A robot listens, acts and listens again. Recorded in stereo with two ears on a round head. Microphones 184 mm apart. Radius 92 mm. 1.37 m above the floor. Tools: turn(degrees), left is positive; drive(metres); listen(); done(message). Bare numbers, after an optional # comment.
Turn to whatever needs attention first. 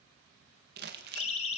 # The siren: about 30° left or 150° left.
turn(30)
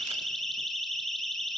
done("Found it: a siren, straight ahead, 2 to 4 m away.")